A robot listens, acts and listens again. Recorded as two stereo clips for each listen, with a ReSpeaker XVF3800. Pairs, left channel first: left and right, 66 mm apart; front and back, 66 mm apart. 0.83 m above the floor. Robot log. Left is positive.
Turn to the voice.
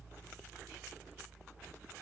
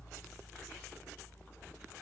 cmd idle
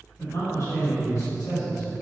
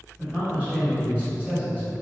note: The man speaking: 115° left.
cmd yaw +115
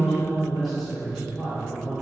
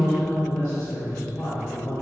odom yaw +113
end: Facing the man speaking.